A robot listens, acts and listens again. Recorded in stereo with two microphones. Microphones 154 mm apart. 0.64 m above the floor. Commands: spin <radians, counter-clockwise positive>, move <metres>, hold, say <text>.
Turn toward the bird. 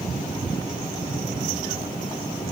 hold
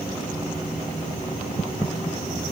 hold
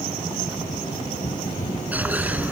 spin -0.52
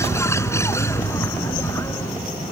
spin 0.35
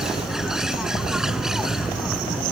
say Facing the bird.